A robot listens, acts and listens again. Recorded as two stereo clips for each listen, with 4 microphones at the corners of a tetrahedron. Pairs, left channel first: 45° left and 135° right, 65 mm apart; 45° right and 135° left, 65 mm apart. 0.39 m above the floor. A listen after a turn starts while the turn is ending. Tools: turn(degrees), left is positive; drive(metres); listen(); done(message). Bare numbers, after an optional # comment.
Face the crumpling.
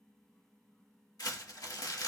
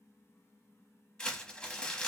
# The crumpling: 30° left.
turn(30)
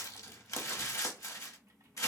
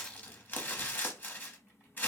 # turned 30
# The crumpling is now 15° left.
turn(15)
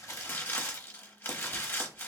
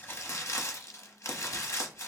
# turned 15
done("Found it: crumpling, straight ahead, under 1 m away.")